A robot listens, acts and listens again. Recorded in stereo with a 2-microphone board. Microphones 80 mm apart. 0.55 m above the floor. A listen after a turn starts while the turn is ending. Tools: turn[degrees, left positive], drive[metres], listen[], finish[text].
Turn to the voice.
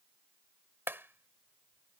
Action: listen[]
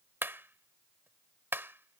Action: listen[]
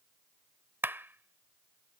Action: finish[I can't make out anyone speaking, only a clap.]